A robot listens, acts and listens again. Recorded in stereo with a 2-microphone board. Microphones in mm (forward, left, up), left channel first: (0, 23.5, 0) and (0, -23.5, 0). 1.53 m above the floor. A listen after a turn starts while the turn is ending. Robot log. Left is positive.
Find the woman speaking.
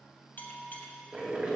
cmd idle
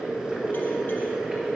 cmd idle
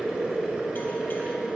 end: I can't make out a woman speaking to turn to.